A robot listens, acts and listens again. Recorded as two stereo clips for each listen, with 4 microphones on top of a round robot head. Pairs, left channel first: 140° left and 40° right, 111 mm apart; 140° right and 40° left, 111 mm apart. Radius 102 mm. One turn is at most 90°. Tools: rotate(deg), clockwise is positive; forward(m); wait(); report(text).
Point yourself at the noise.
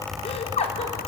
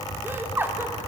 rotate(-90)
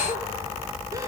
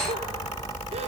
rotate(-20)
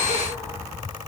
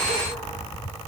wait()
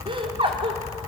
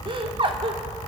report("Found it: laughter, straight ahead.")